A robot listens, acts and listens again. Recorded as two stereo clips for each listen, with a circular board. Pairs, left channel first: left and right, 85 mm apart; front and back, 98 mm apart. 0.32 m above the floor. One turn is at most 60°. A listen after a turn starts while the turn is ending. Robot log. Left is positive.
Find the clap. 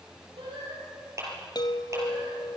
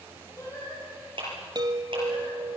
note: The clap: 145° right.
cmd yaw -60
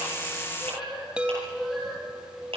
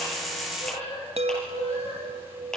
note: The clap is now 85° right.
cmd yaw -60
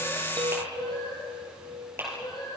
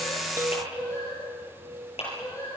note: The clap is now 25° right.
cmd yaw -25
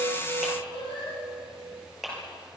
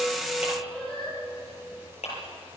end: Found it: a clap, straight ahead.